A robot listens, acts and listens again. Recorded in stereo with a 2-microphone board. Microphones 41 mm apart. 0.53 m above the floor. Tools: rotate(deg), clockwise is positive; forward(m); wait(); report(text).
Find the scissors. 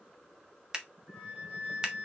rotate(20)
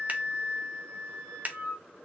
rotate(135)
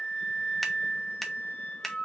report("Found it: scissors, straight ahead, under 1 m away.")